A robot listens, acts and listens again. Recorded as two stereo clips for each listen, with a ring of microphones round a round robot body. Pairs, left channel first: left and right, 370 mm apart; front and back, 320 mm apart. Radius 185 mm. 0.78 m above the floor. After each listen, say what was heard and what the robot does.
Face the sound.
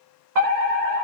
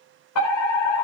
The fire alarm: 50° right. Turn 50° right.
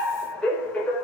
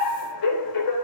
Facing the fire alarm.